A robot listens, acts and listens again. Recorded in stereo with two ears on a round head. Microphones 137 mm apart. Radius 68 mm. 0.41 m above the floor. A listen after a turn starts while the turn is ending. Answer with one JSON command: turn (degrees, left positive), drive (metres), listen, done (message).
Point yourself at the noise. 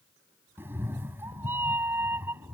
{"turn": -15}
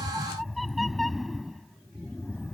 {"done": "Facing the cat meowing."}